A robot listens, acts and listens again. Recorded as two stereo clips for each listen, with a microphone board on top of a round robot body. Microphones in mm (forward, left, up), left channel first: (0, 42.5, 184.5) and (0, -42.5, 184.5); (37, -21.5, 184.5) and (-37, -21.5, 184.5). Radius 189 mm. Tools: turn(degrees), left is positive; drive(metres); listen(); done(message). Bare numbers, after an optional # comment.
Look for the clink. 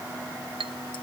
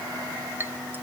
# The clink: 115° right.
turn(-115)
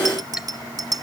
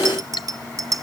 listen()
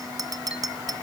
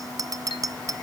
listen()
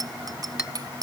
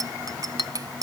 done("I heard a clink from this way, but can't make it out now.")